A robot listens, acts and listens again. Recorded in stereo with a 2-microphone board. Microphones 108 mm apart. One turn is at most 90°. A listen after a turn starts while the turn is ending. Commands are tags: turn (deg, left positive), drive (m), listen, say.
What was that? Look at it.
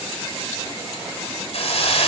<turn deg="70"/>
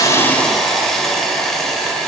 <say>Found it: a hiss, straight ahead, 2 to 4 m away.</say>